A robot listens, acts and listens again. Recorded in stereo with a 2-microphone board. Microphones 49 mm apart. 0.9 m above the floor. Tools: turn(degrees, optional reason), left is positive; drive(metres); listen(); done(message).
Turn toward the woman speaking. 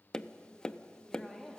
turn(degrees=30)
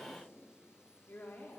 turn(degrees=135, reason="So it is at 135° left.")
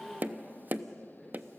done("Facing the woman speaking, 2 to 4 m away.")